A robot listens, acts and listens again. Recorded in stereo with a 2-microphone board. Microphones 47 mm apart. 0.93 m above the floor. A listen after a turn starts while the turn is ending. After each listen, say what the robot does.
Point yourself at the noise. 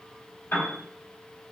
Turn 50° left.
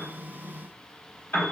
Turn 60° left.
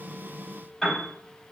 Turn 10° left.
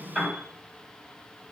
Facing the piano.